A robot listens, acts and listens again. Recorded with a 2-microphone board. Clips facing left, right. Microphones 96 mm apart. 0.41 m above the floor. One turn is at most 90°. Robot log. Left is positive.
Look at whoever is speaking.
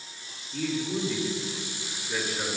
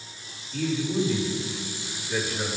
note: The man speaking: about 20° left or 160° left.
cmd yaw +20
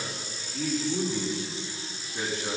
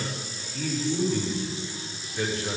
note: So it is at 140° left.
cmd yaw +90
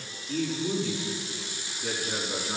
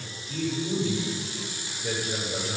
note: The man speaking is now 75° left.
cmd yaw +75
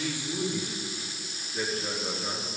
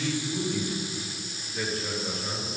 note: The man speaking is now 10° left.
cmd yaw +10
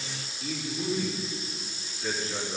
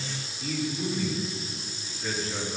end: Facing the man speaking, over 4 m away.